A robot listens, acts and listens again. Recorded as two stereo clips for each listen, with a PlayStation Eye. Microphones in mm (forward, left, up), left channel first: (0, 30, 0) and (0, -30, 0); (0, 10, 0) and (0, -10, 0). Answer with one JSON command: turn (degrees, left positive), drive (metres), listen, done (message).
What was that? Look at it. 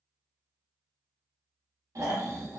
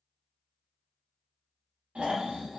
{"turn": -90}
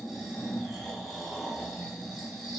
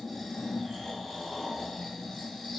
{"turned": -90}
{"done": "Facing the snoring."}